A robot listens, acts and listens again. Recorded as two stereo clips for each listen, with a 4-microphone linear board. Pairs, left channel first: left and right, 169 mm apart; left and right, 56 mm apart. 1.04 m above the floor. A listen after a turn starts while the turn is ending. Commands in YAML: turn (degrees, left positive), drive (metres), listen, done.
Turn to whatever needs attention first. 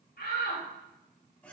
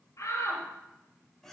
turn: 90
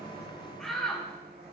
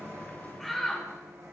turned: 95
done: "Found it: a shout, straight ahead, over 4 m away."